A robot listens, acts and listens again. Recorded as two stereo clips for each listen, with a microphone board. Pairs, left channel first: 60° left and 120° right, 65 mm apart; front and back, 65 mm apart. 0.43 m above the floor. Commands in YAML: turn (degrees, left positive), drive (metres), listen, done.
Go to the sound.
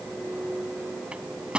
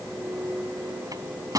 turn: 165
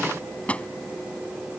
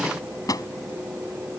turn: -10
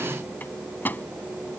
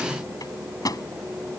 drive: 1.0
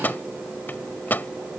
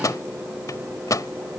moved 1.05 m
drive: 1.0
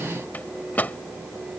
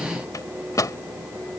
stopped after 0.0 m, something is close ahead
done: "Arrived at the microwave, straight ahead."